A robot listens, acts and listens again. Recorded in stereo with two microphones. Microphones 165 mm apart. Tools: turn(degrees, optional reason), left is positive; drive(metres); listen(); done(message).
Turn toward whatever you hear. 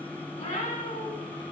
turn(degrees=50, reason="The cat meowing: about 50° left or 130° left.")
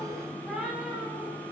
done("Found it: a cat meowing, straight ahead.")